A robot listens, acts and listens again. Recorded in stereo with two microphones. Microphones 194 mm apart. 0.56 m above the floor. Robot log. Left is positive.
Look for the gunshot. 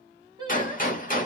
note: The gunshot: about 45° left or 135° left.
cmd yaw +45
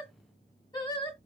cmd idle
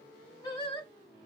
end: I heard a gunshot, but can't make it out now. It was about straight ahead or 90° left.